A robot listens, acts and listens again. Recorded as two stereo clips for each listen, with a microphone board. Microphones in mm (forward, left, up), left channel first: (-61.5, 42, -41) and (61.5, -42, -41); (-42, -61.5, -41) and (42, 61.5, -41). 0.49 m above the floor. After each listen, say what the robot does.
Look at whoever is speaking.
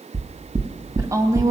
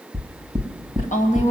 Turn 100° right.
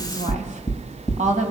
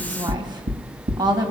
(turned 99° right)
Facing the woman speaking.